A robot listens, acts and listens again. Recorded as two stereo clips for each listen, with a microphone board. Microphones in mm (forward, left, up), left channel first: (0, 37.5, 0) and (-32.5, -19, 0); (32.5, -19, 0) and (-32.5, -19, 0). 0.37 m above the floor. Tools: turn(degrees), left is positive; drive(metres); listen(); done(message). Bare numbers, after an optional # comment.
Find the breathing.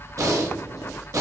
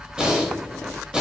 # The breathing: 105° right.
turn(-105)
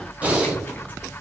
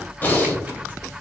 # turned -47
# The breathing is now 55° right.
turn(-55)
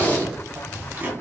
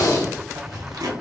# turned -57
done("Found it: breathing, straight ahead.")